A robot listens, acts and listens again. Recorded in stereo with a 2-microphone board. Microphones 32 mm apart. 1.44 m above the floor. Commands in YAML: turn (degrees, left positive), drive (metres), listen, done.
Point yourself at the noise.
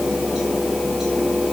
listen: true
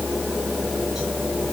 listen: true
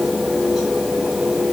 done: "I can't make out anything to turn to."